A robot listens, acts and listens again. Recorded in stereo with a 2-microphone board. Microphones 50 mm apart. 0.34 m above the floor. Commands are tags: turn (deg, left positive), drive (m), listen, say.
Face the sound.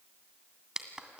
<turn deg="-15"/>
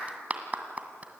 <turn deg="-150"/>
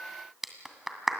<say>Found it: a clap, straight ahead, 2 to 4 m away.</say>